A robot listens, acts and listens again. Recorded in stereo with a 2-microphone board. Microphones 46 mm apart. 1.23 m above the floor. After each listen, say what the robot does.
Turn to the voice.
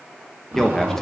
Turn 30° left.
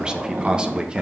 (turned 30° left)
Turn 20° right.
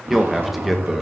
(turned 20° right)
Facing the man speaking, 1 to 2 m away.